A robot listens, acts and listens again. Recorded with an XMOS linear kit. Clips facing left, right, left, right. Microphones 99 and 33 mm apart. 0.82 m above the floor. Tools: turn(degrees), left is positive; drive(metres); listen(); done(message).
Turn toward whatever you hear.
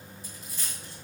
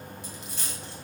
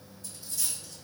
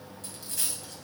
turn(degrees=-90)
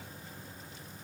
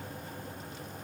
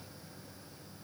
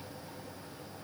done("Facing where the dropped coin came from. I can't hear it now.")